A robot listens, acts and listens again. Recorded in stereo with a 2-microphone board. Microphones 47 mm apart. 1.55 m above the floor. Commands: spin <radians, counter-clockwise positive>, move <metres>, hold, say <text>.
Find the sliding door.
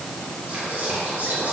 hold
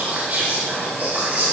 hold
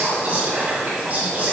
say I can't make out a sliding door, only whispering.